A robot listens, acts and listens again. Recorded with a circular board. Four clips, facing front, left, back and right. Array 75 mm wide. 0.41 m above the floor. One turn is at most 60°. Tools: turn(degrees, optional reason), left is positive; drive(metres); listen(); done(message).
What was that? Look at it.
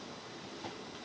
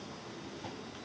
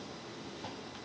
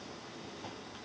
listen()
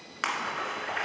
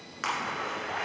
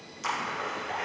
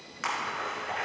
turn(degrees=10, reason="The splash: 10° left.")
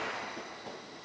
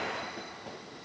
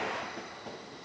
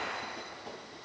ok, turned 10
done("I heard a splash from this way, but can't make it out now.")